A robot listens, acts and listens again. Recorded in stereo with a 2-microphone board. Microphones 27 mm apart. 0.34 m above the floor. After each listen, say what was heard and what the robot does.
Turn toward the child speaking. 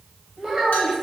The child speaking: about 25° right or 155° right. Turn 25° right.
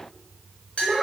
Found it: a child speaking, straight ahead, under 1 m away.